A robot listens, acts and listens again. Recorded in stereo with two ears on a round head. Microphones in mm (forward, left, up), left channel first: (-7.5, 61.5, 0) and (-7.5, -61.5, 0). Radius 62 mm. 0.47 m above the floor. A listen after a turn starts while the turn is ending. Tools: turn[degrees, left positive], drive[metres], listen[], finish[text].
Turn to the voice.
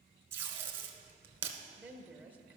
Action: turn[-30]
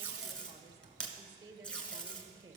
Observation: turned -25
Thought: So it is at 140° right.
Action: turn[-140]
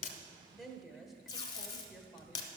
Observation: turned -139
Action: finish[Facing the woman speaking, 1 to 2 m away.]